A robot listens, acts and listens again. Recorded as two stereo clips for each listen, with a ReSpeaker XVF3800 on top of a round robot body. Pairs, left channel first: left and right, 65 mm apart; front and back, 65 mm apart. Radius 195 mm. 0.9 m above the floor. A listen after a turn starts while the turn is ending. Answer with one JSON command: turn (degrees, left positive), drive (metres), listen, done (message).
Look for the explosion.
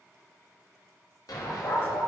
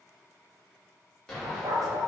{"turn": 80}
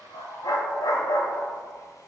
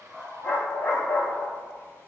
{"done": "I heard an explosion from this way, but can't make it out now."}